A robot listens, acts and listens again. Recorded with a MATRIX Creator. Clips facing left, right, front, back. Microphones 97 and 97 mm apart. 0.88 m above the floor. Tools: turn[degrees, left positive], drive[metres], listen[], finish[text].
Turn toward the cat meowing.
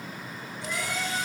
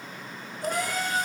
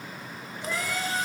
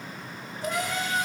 Thought: The cat meowing: 125° right.
Action: turn[-125]
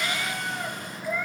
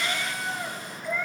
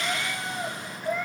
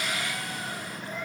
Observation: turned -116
Action: finish[Facing the cat meowing, 2 to 4 m away.]